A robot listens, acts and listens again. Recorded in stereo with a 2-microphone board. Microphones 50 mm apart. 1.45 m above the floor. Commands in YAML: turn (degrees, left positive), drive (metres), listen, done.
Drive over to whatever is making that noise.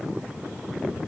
listen: true
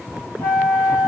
turn: 70
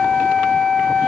drive: 1.0
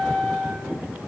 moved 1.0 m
drive: 1.0
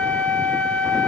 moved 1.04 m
turn: 15
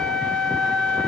drive: 1.0
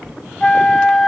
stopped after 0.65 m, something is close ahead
turn: 15
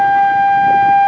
done: "I am next to the flute."